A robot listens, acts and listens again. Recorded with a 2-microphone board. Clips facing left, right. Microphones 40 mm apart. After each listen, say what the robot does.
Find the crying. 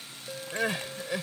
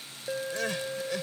Turn 15° left.
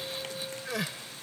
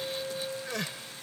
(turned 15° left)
Facing the crying.